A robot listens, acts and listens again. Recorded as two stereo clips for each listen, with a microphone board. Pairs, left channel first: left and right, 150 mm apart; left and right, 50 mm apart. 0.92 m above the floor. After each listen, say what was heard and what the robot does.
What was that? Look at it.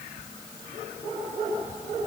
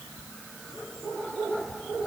Keep listening.
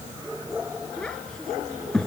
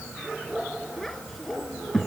Turn 30° left.
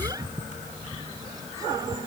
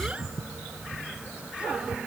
Keep listening.
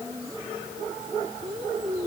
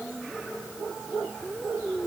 So it is at 25° right. Turn 25° right.
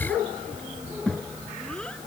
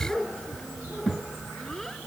Found it: a child speaking, straight ahead.